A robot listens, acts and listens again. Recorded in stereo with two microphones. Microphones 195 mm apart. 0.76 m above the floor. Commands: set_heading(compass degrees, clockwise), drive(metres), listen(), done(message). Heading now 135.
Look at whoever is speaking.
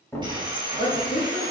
set_heading(80)
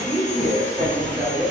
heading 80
set_heading(70)
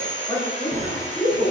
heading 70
set_heading(60)
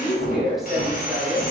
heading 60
done("Found it: a woman speaking, straight ahead.")